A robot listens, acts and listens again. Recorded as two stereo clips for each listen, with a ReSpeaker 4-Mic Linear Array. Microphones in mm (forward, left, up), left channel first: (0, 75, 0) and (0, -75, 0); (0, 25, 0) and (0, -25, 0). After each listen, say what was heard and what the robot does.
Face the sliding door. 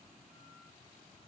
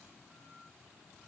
Keep listening.
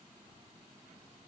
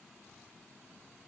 Keep listening.
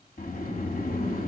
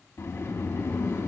The sliding door: about 75° left or 105° left. Turn 75° left.
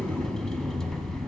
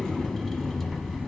Found it: a sliding door, straight ahead, under 1 m away.